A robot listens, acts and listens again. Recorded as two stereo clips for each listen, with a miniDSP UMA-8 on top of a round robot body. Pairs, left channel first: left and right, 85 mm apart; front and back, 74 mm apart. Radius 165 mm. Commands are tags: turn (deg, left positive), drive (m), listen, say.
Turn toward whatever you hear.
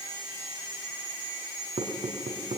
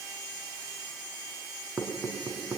<turn deg="-100"/>
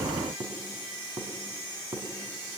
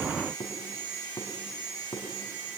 <turn deg="-35"/>
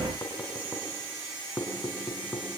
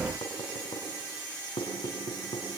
<turn deg="15"/>
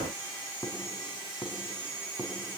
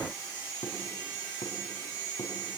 <say>Facing the knocking, 2 to 4 m away.</say>